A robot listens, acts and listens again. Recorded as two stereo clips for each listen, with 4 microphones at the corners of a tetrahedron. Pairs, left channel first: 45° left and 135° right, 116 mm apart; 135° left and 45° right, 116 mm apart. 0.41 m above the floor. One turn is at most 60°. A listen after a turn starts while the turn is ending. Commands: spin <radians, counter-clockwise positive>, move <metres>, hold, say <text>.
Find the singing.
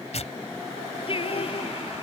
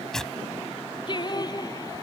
spin 1.05
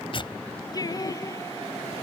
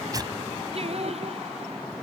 spin -0.26
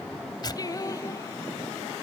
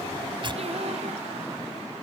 spin -0.26
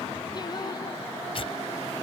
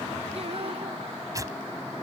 spin -0.17
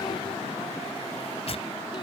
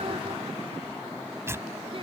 hold
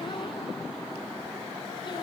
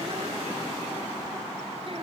hold
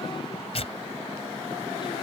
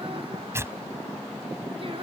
say I heard singing from this way, but can't make it out now.